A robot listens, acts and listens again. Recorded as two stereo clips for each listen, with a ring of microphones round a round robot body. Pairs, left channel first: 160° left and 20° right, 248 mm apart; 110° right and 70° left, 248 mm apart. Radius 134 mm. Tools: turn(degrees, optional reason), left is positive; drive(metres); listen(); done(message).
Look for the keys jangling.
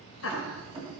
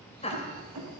turn(degrees=45, reason="The keys jangling: 45° left.")
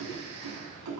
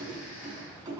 turn(degrees=-10, reason="The keys jangling is now 10° right.")
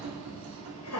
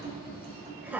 done("Facing the keys jangling.")